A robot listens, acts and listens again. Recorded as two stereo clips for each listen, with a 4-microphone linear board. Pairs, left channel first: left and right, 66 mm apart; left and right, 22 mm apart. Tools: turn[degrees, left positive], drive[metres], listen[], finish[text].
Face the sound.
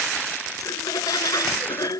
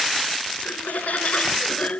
Thought: The laughter: about 70° left or 110° left.
Action: turn[70]
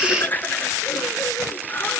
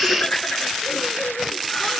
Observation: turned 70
Thought: So it is at 30° left.
Action: turn[30]
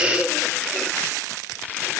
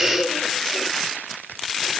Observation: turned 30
Action: finish[Found it: laughter, straight ahead.]